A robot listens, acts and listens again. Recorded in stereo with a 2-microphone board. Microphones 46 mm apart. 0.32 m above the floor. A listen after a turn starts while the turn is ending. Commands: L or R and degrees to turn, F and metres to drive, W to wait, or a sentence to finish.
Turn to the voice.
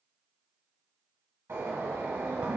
W
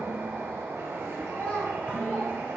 L35
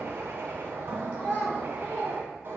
L45
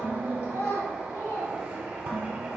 L105
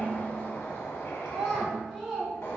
Found it: a child speaking, straight ahead, 2 to 4 m away.